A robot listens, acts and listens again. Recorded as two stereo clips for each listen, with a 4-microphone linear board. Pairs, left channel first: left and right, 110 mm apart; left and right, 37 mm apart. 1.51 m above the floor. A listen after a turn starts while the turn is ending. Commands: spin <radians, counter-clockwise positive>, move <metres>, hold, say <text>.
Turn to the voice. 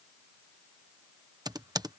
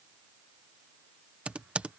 hold
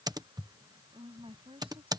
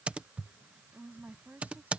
spin -1.05
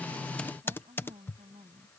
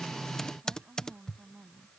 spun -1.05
spin -1.13
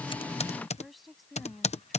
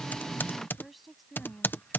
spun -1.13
say Found it: a woman speaking, straight ahead.